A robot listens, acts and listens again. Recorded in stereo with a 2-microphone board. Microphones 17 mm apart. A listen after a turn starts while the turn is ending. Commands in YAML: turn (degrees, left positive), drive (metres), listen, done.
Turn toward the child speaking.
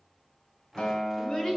turn: 45
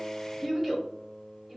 turn: -15
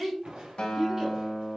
turn: -15
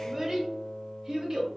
turn: -30
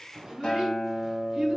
turn: -25
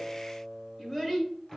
turn: 20
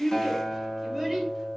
done: "Found it: a child speaking, straight ahead."